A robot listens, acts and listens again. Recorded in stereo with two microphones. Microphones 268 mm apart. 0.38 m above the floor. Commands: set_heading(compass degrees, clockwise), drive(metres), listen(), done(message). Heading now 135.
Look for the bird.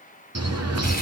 set_heading(205)
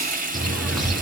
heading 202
done("Found it: a bird, straight ahead, 2 to 4 m away.")